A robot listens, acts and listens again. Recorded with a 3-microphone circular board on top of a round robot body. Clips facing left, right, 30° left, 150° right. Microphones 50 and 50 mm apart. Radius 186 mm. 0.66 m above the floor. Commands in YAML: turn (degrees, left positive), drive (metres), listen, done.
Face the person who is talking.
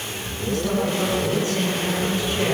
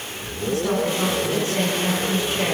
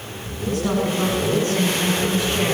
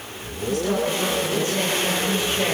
turn: -20
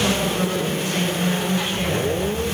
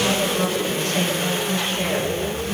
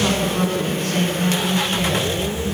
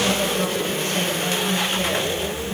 done: "Facing the woman speaking, over 4 m away."